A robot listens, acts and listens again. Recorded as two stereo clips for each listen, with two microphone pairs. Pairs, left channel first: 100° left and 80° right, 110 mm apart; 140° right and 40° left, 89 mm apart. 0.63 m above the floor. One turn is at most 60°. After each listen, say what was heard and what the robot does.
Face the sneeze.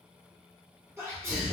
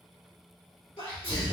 The sneeze: 145° right. Turn 60° right.
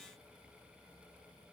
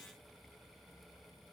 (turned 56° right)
Nothing new. It was at 90° right. Turn 60° right.
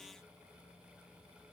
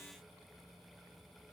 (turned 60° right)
Nothing new. It was at 30° right. Turn 30° right.
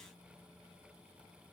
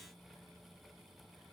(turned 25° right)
I heard a sneeze from this way, but can't make it out now.